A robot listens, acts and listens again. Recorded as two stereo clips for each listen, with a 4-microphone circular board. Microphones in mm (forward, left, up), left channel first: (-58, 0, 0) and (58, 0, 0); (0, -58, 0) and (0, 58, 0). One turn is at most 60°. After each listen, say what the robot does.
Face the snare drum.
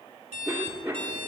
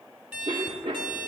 Keep listening.
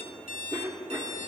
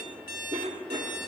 Keep listening.
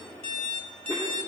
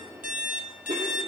I can't make out a snare drum to turn to.